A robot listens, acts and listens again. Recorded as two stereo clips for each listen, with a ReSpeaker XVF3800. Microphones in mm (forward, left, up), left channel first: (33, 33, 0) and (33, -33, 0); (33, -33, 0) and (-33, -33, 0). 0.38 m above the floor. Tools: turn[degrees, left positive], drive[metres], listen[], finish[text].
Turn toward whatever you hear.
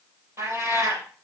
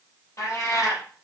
Thought: The cat meowing: 45° right.
Action: turn[-45]
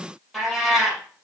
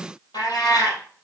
Action: finish[Facing the cat meowing, 2 to 4 m away.]